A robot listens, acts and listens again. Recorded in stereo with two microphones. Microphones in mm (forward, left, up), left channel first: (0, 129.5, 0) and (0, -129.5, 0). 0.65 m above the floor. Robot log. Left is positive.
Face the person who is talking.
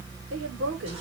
note: The woman speaking: about 60° right or 120° right.
cmd yaw -60
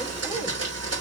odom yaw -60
cmd idle
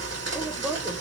note: So it is at 10° right.
cmd yaw -10
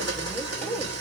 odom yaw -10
end: Found it: a woman speaking, straight ahead, 1 to 2 m away.